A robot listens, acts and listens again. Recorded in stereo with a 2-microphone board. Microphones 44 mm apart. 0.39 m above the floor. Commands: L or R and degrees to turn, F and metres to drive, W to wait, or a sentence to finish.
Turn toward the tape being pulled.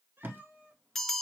R65
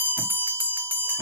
W
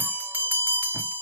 W
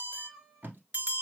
R45
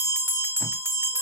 W
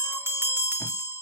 W
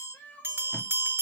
I heard tape being pulled from this way, but can't make it out now.